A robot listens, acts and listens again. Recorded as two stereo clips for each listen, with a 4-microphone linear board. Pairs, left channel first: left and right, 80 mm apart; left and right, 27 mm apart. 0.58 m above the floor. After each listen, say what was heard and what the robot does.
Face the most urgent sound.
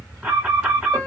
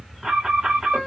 Turn 30° right.
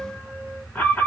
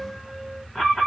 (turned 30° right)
So it is at 20° left. Turn 20° left.
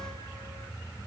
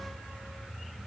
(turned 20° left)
Keep listening.
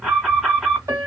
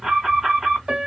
Facing the alarm, 2 to 4 m away.